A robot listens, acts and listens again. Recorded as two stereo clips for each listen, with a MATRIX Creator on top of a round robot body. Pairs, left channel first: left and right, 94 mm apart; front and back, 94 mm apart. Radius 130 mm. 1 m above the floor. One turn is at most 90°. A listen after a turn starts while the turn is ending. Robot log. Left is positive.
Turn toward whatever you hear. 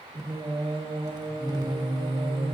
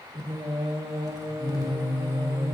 note: The singing: 130° right.
cmd yaw -90
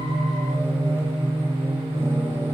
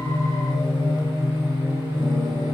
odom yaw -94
note: The singing is now 30° right.
cmd yaw -30
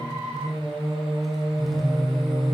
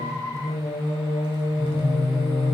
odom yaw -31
end: Found it: singing, straight ahead, over 4 m away.